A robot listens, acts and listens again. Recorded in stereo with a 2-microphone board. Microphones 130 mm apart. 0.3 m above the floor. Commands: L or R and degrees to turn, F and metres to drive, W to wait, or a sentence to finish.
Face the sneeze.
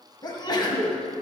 L35
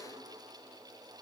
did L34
W
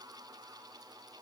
I heard a sneeze, but can't make it out now. It was about straight ahead or 110° left.